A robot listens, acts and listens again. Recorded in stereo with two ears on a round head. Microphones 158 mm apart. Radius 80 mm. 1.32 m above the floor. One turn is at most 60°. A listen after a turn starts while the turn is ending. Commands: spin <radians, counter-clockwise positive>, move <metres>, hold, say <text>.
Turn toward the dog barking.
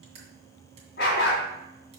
spin 1.05
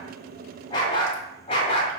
spin 0.61
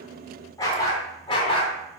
spin 0.52
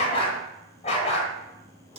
spin 0.61
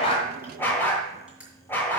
spin 0.17
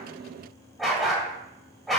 say Found it: a dog barking, straight ahead, 1 to 2 m away.